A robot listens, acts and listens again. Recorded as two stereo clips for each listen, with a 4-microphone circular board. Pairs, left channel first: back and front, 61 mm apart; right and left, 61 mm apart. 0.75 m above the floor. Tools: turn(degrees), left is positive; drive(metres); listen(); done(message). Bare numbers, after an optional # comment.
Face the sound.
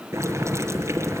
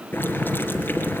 # The boiling: 35° right.
turn(-35)
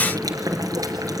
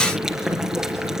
# The boiling is now 10° left.
turn(10)
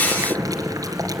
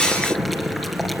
done("Found it: boiling, straight ahead, 2 to 4 m away.")